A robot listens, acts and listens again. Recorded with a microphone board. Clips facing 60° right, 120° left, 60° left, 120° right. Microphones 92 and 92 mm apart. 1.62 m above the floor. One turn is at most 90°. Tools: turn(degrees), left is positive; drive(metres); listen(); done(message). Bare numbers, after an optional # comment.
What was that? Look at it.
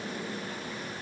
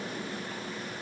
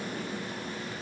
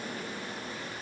listen()
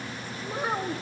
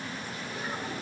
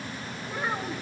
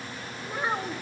# The child speaking: 50° right.
turn(-50)
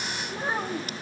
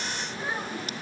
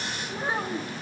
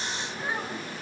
done("Facing the child speaking, 2 to 4 m away.")